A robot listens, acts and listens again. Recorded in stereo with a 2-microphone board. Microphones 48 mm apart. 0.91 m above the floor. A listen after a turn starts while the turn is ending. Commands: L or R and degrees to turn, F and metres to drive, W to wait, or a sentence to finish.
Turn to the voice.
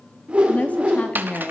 L30
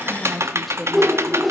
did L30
Found it: a woman speaking, straight ahead.